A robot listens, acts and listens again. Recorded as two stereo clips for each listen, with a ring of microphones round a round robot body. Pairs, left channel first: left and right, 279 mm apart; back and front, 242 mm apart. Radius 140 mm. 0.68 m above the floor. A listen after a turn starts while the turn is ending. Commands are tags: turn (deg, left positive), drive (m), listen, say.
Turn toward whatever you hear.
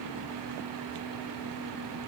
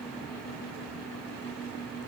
<listen/>
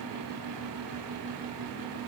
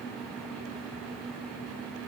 <listen/>
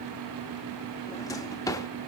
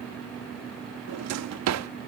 <turn deg="10"/>
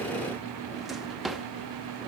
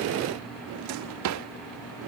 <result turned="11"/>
<say>Found it: a drawer, straight ahead, under 1 m away.</say>